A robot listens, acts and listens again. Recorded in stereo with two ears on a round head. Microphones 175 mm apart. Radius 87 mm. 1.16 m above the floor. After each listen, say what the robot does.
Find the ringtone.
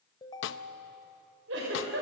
Turn 20° left.
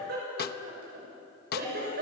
Keep listening.
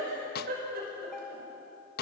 Facing the ringtone, 2 to 4 m away.